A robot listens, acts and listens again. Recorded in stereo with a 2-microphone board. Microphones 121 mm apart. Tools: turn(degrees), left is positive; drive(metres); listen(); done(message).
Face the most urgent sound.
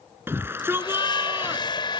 turn(degrees=-20)
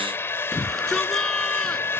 done("Facing the shout.")